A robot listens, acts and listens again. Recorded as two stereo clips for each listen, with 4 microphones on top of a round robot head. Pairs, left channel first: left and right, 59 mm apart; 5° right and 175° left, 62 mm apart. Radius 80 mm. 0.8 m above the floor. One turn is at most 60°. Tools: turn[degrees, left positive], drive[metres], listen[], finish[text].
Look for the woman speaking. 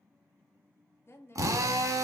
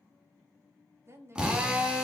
Thought: The woman speaking: 130° left.
Action: turn[60]
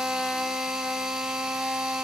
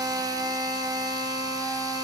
Thought: Nothing new. It was at 70° left.
Action: turn[60]
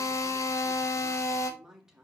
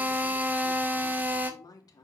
Action: finish[Found it: a woman speaking, straight ahead.]